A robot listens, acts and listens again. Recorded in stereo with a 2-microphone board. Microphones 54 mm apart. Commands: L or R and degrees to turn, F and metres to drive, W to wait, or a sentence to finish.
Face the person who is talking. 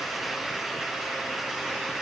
W
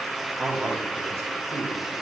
R55
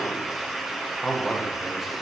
Facing the man speaking.